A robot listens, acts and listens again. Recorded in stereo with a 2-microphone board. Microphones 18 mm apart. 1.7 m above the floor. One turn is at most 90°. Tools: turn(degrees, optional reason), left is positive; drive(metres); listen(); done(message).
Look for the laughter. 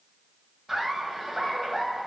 turn(degrees=-30)
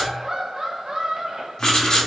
turn(degrees=-90, reason="So it is at 145° right.")
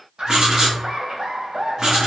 turn(degrees=-55, reason="The laughter is now 55° right.")
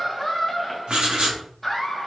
done("Found it: laughter, straight ahead, 2 to 4 m away.")